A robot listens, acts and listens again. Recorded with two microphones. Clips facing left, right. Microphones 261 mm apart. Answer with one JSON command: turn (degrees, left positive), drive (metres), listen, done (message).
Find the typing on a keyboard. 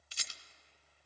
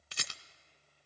{"listen": true}
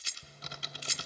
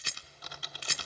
{"turn": 25}
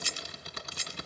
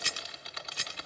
{"turn": 125}
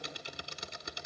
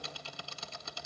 {"turn": 20}
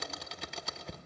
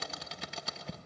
{"done": "Facing the typing on a keyboard, 1 to 2 m away."}